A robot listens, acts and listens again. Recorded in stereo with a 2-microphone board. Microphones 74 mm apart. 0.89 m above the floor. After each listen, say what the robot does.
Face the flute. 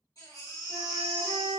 Turn 90° left.
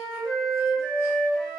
Turn 10° left.
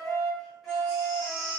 Facing the flute.